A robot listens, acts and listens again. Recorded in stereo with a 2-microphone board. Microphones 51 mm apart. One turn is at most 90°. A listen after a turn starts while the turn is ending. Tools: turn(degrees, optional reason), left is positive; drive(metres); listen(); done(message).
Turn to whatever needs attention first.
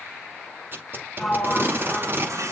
turn(degrees=-75, reason="The baby crying: about 75° right or 105° right.")
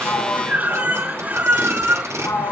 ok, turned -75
turn(degrees=-30, reason="So it is at 30° right.")
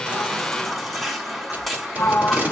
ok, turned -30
done("Facing the baby crying, 2 to 4 m away.")